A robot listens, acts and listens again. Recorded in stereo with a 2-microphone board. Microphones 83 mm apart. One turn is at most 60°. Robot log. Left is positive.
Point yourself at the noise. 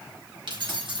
note: The keys jangling: about 65° right or 115° right.
cmd yaw -60
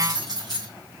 note: So it is at 50° right.
cmd yaw -50
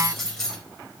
end: Facing the keys jangling, 2 to 4 m away.